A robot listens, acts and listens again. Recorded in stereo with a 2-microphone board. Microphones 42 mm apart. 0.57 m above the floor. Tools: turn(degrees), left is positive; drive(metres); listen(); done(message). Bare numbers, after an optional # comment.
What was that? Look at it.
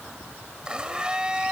# The blender: about 20° right or 160° right.
turn(-20)
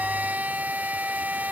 # So it is at 135° right.
turn(-135)
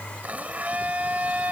# The blender is now 35° right.
turn(-35)
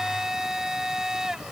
# The blender is now 10° right.
turn(-10)
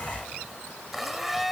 done("Found it: a blender, straight ahead.")